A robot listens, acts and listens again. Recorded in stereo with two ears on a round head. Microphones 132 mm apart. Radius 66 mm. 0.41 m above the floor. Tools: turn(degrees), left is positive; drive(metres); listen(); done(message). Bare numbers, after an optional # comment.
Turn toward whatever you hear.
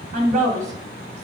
# The woman speaking: about 55° right or 125° right.
turn(-55)
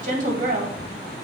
# So it is at 55° right.
turn(-55)
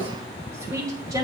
# The woman speaking is now 25° right.
turn(-25)
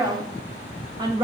# The woman speaking is now 30° right.
turn(-30)
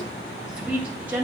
# The woman speaking is now 15° right.
turn(-15)
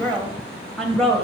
done("Found it: a woman speaking, straight ahead.")